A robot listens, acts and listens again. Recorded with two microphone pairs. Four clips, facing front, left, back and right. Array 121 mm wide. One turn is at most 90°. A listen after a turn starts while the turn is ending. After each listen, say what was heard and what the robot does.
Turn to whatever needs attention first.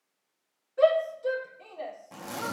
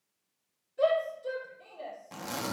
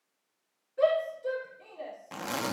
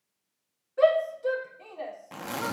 The shout: 75° right. Turn 75° right.
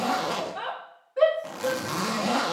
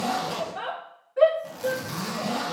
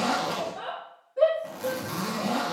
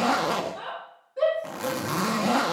The shout is now 25° left. Turn 25° left.
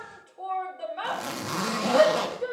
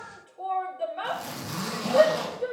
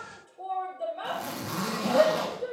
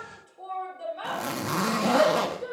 The shout is now 15° left. Turn 15° left.
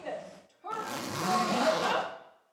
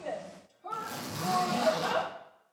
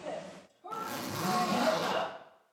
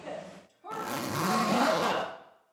Found it: a shout, straight ahead, 2 to 4 m away.